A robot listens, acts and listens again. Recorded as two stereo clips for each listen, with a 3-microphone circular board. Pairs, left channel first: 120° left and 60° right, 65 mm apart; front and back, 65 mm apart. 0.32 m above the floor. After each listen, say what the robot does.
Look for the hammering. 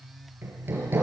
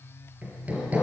Turn 115° right.
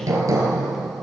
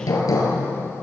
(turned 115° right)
Turn 25° right.
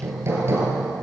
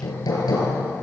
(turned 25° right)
Turn 10° right.
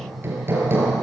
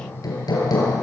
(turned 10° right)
Found it: hammering, straight ahead.